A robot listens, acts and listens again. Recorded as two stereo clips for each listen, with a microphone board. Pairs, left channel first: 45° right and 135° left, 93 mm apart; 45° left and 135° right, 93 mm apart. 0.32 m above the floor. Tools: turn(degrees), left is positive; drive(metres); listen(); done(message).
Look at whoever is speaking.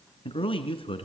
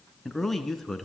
turn(degrees=-45)
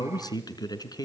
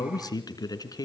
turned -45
done("Facing the man speaking, 2 to 4 m away.")